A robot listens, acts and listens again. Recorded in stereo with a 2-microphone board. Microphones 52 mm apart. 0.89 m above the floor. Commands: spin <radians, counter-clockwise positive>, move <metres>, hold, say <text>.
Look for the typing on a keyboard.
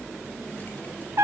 hold
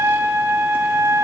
hold
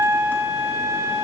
say I can't make out typing on a keyboard, only a trumpet.